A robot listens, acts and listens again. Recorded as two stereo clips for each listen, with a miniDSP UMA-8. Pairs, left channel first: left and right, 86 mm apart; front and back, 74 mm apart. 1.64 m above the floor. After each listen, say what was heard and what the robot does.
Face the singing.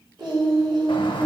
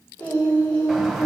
The singing: 60° right. Turn 60° right.
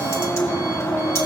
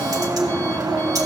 Keep listening.
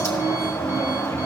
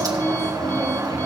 Keep listening.
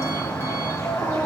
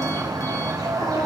Facing where the singing came from. I can't hear it now.